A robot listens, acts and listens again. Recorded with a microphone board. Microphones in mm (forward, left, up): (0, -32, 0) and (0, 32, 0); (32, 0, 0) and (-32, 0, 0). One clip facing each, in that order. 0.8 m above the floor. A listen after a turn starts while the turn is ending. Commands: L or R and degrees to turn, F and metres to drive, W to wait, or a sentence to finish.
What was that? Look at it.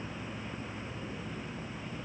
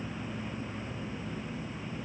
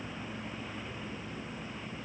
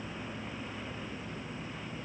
W
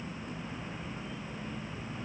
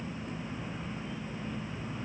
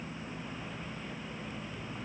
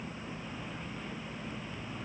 W
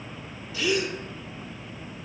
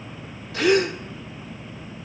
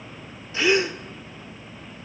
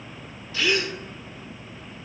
L70
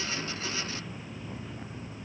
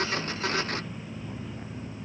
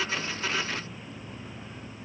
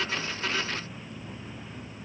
I heard a gasp from this way, but can't make it out now.